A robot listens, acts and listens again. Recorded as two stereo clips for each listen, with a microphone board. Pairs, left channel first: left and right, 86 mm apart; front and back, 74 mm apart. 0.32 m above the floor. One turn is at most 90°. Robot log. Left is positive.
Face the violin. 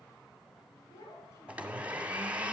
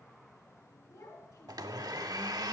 cmd idle
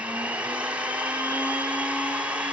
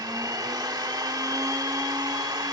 cmd idle
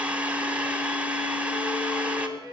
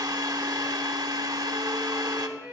note: The violin: 120° left.
cmd yaw +90
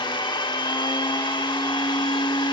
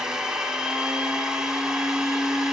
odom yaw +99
note: Nothing new. It was at 20° left.
cmd yaw +20
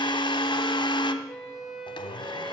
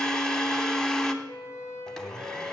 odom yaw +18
end: Facing the violin, 2 to 4 m away.